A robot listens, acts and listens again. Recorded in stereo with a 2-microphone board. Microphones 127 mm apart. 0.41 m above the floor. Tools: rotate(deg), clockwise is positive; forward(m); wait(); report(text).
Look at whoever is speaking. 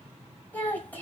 rotate(-30)
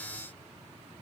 wait()
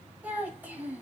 rotate(15)
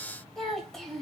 report("Found it: a child speaking, straight ahead, 1 to 2 m away.")